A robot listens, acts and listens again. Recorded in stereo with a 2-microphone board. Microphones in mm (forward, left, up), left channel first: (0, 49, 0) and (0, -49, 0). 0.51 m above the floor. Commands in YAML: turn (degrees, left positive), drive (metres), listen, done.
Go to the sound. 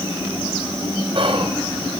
turn: -60
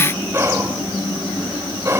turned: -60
turn: -30
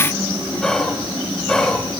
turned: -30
drive: 1.0
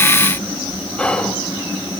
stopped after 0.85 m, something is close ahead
turn: 15
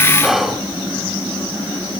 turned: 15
done: "Arrived at the whispering, straight ahead."